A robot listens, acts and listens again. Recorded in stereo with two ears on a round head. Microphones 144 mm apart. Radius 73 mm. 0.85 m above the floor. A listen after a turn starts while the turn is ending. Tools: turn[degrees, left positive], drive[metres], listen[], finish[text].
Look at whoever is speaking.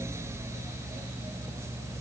Action: listen[]
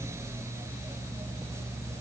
Action: listen[]
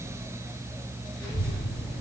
Thought: The child speaking: about 20° left or 160° left.
Action: turn[20]
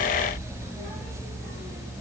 Action: turn[30]
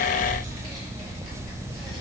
Thought: So it is at 30° right.
Action: turn[-30]
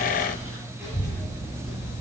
Action: finish[Facing the child speaking.]